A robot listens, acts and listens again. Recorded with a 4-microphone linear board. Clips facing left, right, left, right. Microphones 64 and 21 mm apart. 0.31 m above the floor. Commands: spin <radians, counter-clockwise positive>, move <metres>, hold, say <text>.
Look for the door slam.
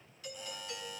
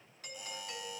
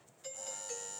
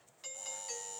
hold
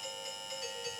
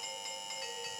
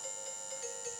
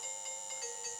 hold
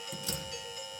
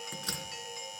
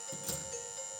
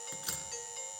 spin -0.87
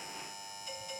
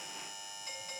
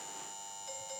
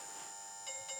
hold
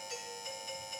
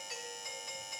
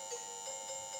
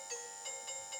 say I heard a door slam, but can't make it out now. It was about straight ahead or 80° right.